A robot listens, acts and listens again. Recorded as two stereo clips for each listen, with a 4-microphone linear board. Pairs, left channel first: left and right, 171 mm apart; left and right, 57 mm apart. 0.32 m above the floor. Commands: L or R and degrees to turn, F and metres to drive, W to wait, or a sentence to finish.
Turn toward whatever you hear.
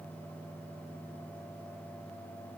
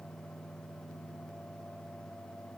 W
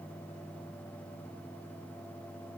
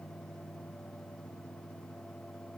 W
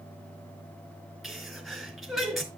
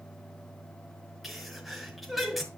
L30
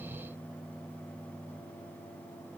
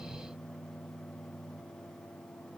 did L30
W
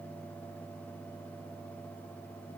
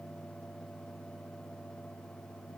I heard a sneeze, but can't make it out now. It was about 30° right or 150° left.